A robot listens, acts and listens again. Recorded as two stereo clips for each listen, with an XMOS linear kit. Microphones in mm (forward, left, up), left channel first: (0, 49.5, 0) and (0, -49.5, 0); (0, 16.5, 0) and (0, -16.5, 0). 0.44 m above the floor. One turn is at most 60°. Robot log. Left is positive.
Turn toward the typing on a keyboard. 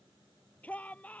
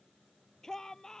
cmd idle
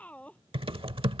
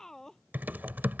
note: The typing on a keyboard: about 65° right or 115° right.
cmd yaw -60
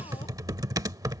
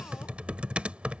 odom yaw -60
note: So it is at 40° right.
cmd yaw -40
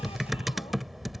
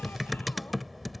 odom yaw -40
end: Found it: typing on a keyboard, straight ahead.